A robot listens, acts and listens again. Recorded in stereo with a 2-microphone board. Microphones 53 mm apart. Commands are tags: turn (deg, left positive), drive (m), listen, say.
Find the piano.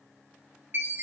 <listen/>
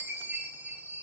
<listen/>
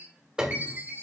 <turn deg="-30"/>
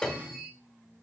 <turn deg="15"/>
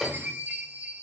<say>Found it: a piano, straight ahead, 1 to 2 m away.</say>